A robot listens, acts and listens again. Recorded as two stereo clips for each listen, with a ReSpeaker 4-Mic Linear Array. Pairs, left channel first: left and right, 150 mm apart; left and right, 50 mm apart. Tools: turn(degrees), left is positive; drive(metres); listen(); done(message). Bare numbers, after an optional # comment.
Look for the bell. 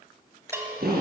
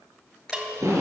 # The bell: about 15° right or 165° right.
turn(-15)
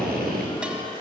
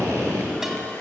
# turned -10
listen()
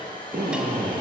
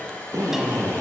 listen()
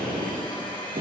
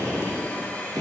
done("I heard a bell, but can't make it out now. It was about 5° right or 155° right.")